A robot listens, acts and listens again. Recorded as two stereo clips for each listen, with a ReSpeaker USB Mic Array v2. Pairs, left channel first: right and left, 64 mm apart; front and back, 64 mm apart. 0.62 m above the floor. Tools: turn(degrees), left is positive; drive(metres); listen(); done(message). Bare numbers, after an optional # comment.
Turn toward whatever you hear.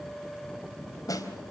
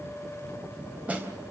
# The snare drum: 110° right.
turn(-110)
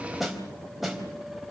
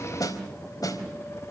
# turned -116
done("Facing the snare drum, 2 to 4 m away.")